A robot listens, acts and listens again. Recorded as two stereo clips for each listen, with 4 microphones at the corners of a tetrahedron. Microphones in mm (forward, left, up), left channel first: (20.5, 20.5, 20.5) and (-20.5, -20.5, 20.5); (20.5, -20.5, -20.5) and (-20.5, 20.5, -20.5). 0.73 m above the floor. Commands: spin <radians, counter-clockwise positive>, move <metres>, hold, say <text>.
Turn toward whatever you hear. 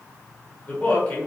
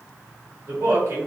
spin 1.83
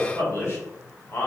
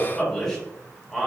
spin 0.87
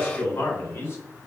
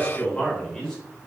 spin 0.52
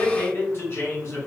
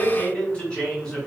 spin 0.52
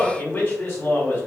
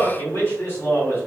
say Found it: a man speaking, straight ahead, 1 to 2 m away.